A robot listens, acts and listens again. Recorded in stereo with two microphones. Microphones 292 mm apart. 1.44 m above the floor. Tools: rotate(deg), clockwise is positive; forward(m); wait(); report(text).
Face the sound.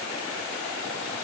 wait()
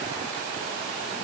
wait()
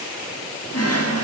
rotate(-55)
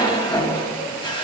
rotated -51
rotate(-20)
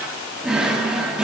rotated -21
report("Facing the drawer.")